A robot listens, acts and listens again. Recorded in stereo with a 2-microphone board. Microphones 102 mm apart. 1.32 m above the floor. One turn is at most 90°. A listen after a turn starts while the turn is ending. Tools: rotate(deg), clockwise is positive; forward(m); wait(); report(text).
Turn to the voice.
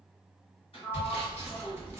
wait()
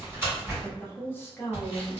rotate(-20)
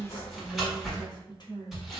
rotate(-90)
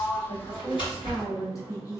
rotate(-30)
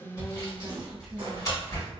wait()
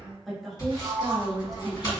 report("Found it: a woman speaking, straight ahead.")